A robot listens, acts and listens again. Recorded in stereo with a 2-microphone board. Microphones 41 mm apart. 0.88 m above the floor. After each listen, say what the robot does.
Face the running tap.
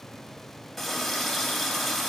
Turn 30° left.
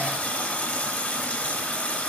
Turn 145° left.
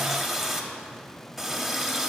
Found it: a running tap, straight ahead.